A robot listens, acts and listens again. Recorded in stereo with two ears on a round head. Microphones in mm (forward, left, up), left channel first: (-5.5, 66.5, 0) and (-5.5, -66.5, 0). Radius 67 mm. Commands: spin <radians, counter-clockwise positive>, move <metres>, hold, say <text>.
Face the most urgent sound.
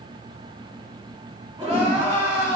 spin -0.70
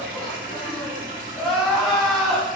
say Facing the crying, 1 to 2 m away.